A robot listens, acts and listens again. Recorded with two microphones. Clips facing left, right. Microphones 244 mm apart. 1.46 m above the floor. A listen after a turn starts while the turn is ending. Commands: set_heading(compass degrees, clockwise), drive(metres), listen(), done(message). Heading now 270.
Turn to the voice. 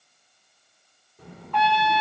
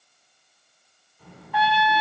set_heading(180)
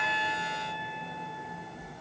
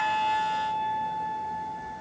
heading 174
done("Found it: a child speaking, straight ahead.")